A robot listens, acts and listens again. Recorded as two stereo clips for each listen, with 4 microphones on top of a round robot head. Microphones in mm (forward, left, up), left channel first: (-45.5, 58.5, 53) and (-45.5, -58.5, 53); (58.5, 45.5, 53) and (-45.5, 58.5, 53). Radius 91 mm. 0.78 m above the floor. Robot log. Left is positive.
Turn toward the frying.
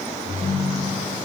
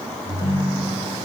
cmd idle
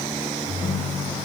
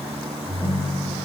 cmd idle
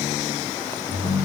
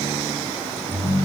end: I can't make out frying to turn to.